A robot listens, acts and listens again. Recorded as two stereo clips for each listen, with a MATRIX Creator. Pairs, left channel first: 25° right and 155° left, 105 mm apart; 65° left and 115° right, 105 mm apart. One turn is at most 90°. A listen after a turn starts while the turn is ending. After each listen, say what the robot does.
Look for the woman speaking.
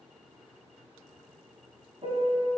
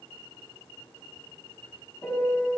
Keep listening.
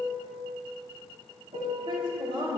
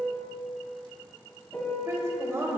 Turn 90° right.
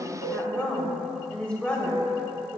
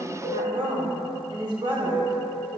Turn 90° right.
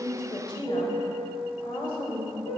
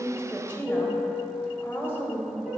Facing the woman speaking.